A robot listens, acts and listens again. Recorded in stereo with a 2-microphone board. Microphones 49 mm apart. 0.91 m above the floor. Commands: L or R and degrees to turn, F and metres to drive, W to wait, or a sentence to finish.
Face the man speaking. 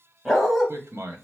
R75
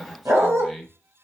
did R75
Facing the man speaking, 1 to 2 m away.